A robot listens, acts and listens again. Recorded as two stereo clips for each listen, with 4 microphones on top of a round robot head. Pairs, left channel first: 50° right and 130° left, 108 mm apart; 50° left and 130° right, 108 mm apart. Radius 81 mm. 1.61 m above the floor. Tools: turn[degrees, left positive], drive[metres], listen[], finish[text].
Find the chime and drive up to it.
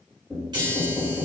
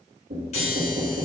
Thought: The chime: 80° left.
Action: turn[80]
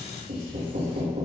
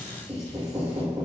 Thought: The chime is now 15° left.
Action: turn[15]
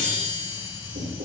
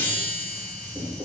Action: drive[1.0]
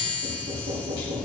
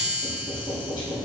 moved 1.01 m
Action: drive[1.0]
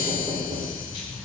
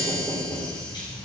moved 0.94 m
Action: drive[1.0]
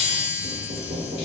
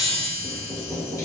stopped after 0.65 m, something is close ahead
Thought: The chime is now 15° right.
Action: turn[-15]
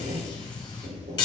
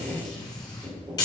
Action: finish[Arrived at the chime, straight ahead.]